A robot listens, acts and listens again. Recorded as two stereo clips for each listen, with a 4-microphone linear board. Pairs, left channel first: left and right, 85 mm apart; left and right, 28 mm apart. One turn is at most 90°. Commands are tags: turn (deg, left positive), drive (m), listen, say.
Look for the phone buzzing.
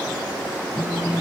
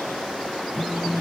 <turn deg="60"/>
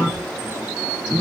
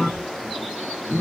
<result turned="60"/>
<turn deg="45"/>
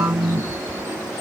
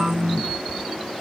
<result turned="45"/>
<turn deg="-10"/>
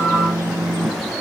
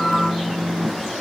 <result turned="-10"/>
<say>Facing the phone buzzing.</say>